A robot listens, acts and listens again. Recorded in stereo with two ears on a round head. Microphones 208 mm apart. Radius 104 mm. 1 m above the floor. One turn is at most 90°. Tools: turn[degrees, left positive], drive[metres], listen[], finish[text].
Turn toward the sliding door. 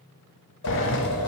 Thought: The sliding door: about 55° left or 125° left.
Action: turn[55]
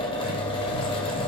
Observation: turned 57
Thought: So it is at 65° left.
Action: turn[65]
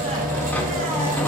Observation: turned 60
Action: finish[Found it: a sliding door, straight ahead.]